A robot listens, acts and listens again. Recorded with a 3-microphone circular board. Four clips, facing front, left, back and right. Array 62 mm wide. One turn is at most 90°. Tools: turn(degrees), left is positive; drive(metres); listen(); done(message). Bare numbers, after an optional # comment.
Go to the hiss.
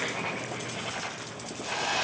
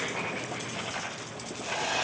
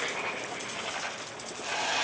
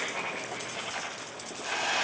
# The hiss: 95° right.
turn(-90)
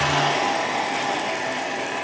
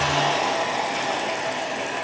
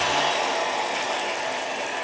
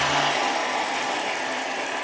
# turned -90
# The hiss is now 35° right.
turn(-35)
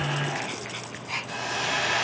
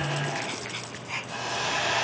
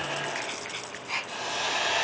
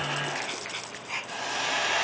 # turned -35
# The hiss is now 25° right.
turn(-25)
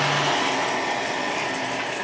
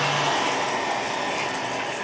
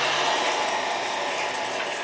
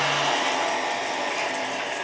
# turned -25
# The hiss is now 10° right.
turn(-10)
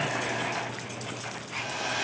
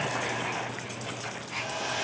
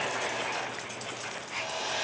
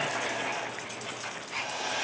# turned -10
drive(1.0)
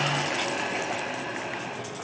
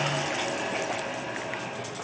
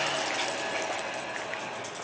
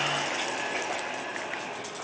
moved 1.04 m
drive(1.0)
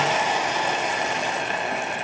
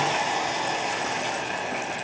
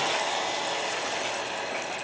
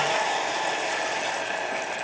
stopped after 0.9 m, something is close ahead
# The hiss is now 10° right.
turn(-10)
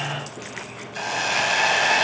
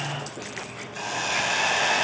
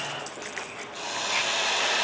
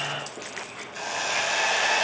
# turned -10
done("Arrived at the hiss, straight ahead.")